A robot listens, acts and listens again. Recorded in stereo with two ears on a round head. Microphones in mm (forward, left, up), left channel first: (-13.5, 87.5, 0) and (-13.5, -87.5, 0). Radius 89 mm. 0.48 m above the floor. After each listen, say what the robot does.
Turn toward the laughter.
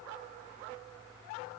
Keep listening.
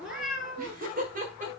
Turn 45° right.
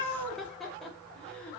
Found it: laughter, straight ahead.